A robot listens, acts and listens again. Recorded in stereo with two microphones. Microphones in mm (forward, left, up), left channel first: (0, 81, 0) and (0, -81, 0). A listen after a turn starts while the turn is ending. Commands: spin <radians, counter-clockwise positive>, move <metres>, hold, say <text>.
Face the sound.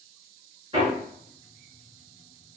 spin -0.61
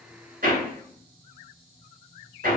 spin -1.83
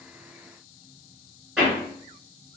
say Found it: hammering, straight ahead, 1 to 2 m away.